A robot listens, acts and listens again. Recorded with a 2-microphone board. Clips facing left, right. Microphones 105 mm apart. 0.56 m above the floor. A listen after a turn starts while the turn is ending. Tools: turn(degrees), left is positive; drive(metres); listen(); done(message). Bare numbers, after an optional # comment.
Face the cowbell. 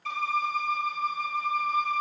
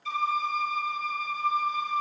listen()
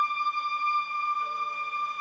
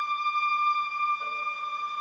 listen()
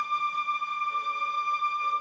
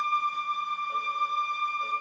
done("I can't make out a cowbell to turn to.")